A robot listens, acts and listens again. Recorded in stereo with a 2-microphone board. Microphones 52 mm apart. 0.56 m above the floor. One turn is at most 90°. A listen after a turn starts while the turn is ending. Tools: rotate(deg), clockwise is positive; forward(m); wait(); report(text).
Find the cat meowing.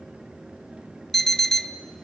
wait()
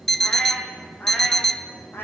rotate(-45)
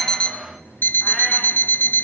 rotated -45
wait()
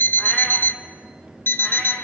wait()
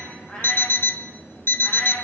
rotate(-20)
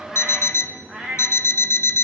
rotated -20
report("Facing the cat meowing, over 4 m away.")